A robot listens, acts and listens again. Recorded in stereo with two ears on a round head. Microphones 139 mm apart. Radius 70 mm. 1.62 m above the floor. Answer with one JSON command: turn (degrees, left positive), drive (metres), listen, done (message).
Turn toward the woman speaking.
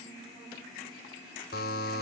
{"listen": true}
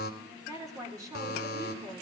{"turn": -20}
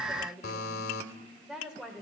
{"turn": -30}
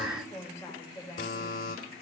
{"turn": 25}
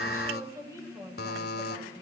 {"turn": -15}
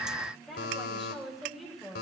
{"done": "Found it: a woman speaking, straight ahead."}